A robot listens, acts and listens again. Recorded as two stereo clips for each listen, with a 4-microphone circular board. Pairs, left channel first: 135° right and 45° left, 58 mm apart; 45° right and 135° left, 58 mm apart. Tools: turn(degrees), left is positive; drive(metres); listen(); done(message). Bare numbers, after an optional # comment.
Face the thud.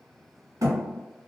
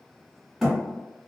# The thud: 50° left.
turn(50)
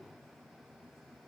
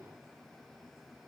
done("Facing where the thud came from. I can't hear it now.")